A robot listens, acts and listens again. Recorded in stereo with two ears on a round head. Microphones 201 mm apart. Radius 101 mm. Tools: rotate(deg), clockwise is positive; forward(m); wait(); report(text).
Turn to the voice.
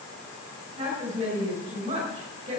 rotate(30)
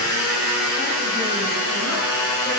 wait()
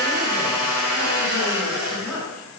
wait()
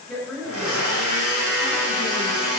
report("Facing the woman speaking.")